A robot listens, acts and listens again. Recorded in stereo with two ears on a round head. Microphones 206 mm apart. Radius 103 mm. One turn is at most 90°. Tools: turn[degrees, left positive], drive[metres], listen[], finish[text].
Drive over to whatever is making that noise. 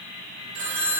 Thought: The phone ringing: about 60° right or 120° right.
Action: turn[-60]
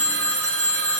Thought: So it is at 60° right.
Action: turn[-60]
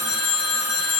Action: drive[1.0]
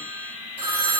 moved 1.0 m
Thought: The phone ringing is now 10° right.
Action: turn[-10]
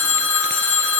Action: drive[1.0]
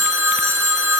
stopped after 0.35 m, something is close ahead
Action: finish[Something is in my way. I am facing the phone ringing but have not reached it.]